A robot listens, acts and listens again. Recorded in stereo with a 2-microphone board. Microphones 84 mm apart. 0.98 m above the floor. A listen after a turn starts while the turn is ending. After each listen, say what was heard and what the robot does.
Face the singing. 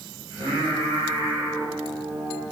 Turn 90° right.
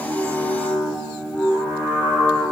So it is at 10° left. Turn 10° left.
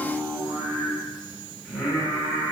The singing is now 10° left. Turn 10° left.
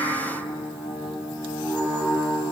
Found it: singing, straight ahead, over 4 m away.